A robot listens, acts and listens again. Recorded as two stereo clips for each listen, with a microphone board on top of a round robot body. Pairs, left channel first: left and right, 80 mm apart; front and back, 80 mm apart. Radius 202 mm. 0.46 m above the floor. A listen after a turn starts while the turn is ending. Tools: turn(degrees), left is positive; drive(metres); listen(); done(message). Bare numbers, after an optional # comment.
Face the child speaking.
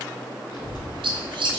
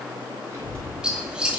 # The child speaking: 120° left.
turn(120)
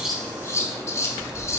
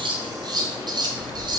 # The child speaking is now 10° right.
turn(-10)
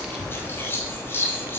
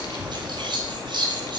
# The child speaking is now 25° right.
turn(-25)
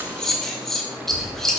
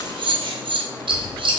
# The child speaking is now 40° right.
turn(-40)
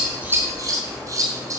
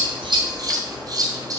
done("Facing the child speaking.")